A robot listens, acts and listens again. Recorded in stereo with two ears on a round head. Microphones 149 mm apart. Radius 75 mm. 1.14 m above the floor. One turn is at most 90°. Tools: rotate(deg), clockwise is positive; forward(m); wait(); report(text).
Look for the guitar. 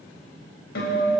rotate(-65)
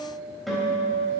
report("Found it: a guitar, straight ahead.")